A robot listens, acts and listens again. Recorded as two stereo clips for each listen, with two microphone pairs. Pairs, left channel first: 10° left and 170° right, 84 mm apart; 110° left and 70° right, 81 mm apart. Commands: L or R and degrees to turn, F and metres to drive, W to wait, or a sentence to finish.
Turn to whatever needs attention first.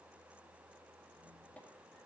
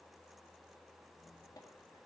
W
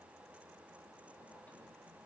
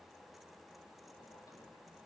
W
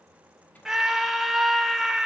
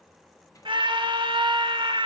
R85
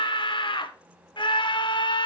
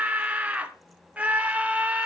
Facing the scream.